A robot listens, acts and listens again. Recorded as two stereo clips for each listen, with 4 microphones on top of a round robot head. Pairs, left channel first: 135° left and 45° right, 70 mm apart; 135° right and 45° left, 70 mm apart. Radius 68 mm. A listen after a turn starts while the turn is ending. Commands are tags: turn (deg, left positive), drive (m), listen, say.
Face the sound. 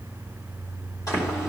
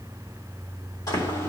<turn deg="180"/>
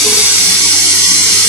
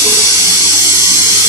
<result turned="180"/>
<say>Facing the running tap, 2 to 4 m away.</say>